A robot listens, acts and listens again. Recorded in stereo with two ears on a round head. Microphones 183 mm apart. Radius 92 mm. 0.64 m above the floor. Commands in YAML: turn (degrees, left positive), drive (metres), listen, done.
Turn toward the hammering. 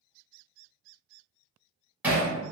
turn: -30
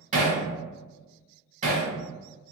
turn: -140
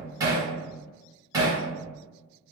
turn: -20
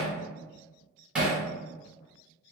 done: "Found it: hammering, straight ahead, 1 to 2 m away."